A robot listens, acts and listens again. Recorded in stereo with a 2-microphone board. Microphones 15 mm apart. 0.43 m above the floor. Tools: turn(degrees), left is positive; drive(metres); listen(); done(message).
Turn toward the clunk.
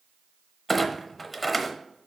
turn(degrees=30)
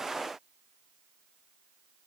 listen()
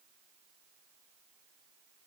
done("I heard a clunk, but can't make it out now. It was about 30° right or 150° left.")